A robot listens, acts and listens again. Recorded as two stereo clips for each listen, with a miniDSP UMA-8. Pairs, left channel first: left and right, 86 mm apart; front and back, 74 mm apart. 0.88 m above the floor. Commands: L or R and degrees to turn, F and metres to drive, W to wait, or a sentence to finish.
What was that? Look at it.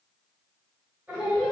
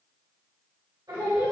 R170
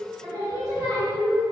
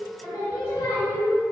R55
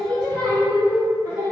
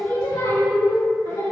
R10
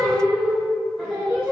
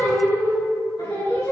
Facing the singing, 2 to 4 m away.